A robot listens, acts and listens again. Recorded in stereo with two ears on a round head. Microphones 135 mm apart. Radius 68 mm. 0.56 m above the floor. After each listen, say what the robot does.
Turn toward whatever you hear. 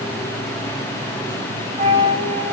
Turn 40° right.
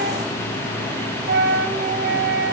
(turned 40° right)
Turn 95° right.
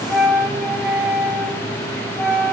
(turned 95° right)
Facing the flute.